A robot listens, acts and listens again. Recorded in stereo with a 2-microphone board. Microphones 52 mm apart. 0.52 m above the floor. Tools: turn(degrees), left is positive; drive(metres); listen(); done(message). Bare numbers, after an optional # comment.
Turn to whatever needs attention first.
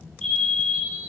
turn(30)
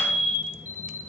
# So it is at 15° right.
turn(-15)
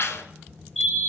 done("Facing the fire alarm, over 4 m away.")